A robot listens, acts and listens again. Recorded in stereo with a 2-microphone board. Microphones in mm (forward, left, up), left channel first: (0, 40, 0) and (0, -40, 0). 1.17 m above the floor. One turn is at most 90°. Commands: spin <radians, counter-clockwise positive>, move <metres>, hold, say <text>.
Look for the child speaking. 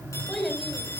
spin 0.52
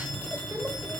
hold
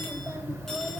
hold
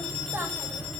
spin -0.52
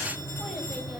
hold
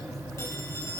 hold
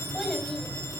say Found it: a child speaking, straight ahead, over 4 m away.